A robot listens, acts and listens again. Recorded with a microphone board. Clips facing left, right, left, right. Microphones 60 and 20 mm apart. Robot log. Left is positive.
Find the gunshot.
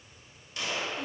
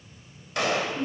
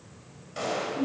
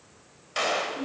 cmd yaw -90
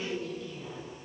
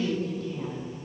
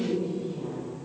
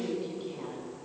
end: I heard a gunshot from this way, but can't make it out now.